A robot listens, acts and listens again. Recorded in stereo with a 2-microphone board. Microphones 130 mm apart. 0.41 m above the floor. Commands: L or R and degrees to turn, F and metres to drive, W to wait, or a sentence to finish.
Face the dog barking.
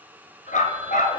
L90
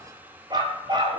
R35
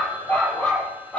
L10
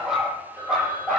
Facing the dog barking, over 4 m away.